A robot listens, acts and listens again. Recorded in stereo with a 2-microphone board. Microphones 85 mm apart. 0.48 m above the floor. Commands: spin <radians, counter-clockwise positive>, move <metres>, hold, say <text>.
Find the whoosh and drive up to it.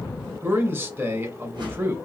spin -1.31
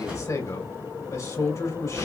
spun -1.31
spin -0.26
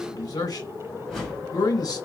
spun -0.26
move 1.0
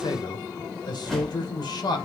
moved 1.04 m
move 1.0
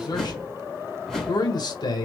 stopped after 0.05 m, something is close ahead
say Arrived at the whoosh, straight ahead.